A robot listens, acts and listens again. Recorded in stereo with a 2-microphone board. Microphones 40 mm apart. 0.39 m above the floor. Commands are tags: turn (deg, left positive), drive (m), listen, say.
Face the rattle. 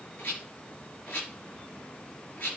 <turn deg="40"/>
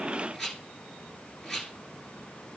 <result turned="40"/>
<say>Facing the rattle.</say>